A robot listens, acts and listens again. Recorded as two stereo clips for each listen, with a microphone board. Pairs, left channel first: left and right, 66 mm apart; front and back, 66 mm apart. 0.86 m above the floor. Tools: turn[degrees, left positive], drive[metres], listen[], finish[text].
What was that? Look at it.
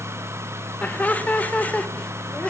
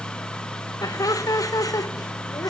Thought: The laughter: 20° left.
Action: turn[20]
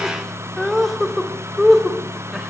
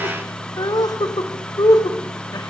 Action: finish[Facing the laughter.]